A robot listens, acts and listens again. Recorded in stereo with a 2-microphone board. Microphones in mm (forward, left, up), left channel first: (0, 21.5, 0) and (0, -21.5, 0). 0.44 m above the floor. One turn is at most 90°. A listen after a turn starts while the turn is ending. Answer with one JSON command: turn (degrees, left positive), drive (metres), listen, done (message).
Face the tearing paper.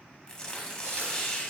{"turn": 20}
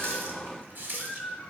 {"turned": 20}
{"listen": true}
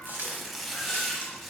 {"done": "Found it: tearing paper, straight ahead."}